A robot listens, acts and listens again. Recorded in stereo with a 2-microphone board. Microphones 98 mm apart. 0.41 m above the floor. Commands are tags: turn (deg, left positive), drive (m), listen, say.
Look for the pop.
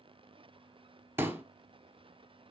<turn deg="-25"/>
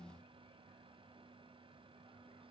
<listen/>
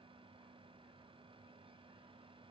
<say>I heard a pop, but can't make it out now. It was about straight ahead or 130° right.</say>